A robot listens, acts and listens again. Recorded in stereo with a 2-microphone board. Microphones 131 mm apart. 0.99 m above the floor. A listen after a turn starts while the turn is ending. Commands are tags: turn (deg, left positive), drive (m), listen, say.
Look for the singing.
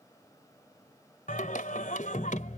<turn deg="90"/>
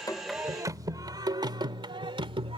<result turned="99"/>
<turn deg="-45"/>
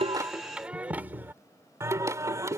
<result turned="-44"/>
<turn deg="-20"/>
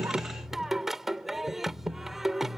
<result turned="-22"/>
<say>Found it: singing, straight ahead.</say>